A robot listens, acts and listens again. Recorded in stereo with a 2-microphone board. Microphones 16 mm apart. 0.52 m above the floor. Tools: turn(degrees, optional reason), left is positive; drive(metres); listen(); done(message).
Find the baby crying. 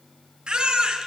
turn(degrees=-90)
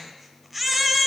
turn(degrees=-10, reason="So it is at 10° right.")
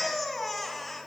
done("Facing the baby crying, 1 to 2 m away.")